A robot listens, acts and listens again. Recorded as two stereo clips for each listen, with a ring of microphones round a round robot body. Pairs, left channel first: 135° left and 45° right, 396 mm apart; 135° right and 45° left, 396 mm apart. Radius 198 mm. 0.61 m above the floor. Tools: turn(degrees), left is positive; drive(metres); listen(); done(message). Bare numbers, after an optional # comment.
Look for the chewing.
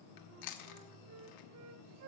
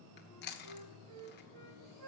# The chewing: 160° left.
turn(160)
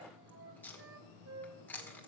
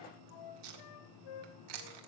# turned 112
# The chewing is now 50° left.
turn(50)
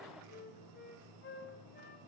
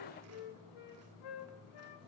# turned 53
listen()
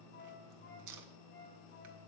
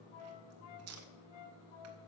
done("Found it: chewing, straight ahead.")